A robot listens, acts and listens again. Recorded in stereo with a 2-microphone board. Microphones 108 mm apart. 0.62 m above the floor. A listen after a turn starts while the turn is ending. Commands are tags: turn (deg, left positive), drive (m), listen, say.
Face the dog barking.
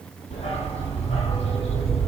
<turn deg="90"/>
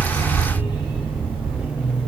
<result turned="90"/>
<turn deg="-15"/>
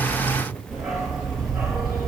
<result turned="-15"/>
<say>Facing the dog barking.</say>